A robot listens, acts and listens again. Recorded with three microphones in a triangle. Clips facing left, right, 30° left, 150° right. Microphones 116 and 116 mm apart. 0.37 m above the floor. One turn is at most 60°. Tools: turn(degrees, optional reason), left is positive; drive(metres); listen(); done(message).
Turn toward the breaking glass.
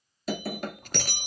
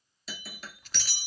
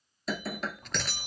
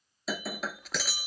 turn(degrees=60, reason="The breaking glass: 125° left.")
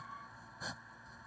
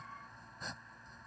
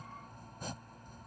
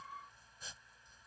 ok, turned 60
turn(degrees=60, reason="Nothing new. It was at 65° left.")
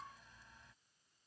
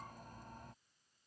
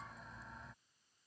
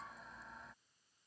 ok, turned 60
done("I heard breaking glass from this way, but can't make it out now.")